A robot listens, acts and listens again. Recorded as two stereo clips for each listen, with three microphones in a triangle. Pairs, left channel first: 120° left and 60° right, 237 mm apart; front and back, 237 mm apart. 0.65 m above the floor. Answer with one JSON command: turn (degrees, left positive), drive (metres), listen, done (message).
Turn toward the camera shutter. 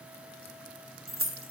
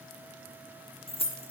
{"listen": true}
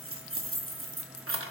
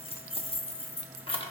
{"listen": true}
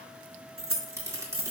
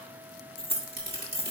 {"turn": -135}
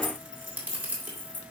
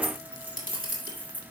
{"turn": 25}
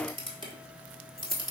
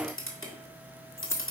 {"done": "Found it: a camera shutter, straight ahead."}